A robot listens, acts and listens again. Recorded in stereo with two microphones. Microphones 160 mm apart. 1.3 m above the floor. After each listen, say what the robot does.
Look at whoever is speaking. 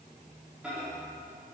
Keep listening.
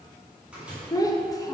Turn 20° left.
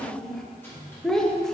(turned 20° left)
Facing the child speaking.